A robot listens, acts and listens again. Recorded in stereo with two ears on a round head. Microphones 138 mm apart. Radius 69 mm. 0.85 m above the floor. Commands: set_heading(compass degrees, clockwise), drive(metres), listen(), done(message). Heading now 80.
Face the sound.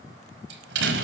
set_heading(170)
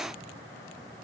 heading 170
done("I heard a door slam from this way, but can't make it out now.")